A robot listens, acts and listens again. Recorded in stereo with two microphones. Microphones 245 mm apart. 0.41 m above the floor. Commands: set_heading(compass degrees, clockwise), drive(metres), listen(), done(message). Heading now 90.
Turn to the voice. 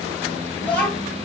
set_heading(60)
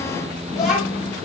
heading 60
set_heading(280)
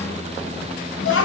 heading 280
set_heading(220)
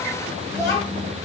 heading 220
set_heading(205)
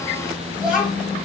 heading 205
done("Found it: a child speaking, straight ahead, 1 to 2 m away.")